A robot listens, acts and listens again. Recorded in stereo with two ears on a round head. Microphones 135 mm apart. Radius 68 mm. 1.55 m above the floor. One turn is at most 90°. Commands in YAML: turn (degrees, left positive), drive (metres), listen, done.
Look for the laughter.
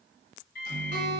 listen: true
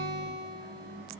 listen: true
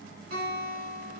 done: "I can't make out laughter to turn to."